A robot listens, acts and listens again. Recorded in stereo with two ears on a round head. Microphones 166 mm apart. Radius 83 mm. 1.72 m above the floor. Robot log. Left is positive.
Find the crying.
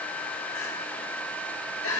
note: The crying: about 75° left or 105° left.
cmd yaw +75
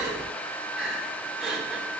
end: Facing the crying.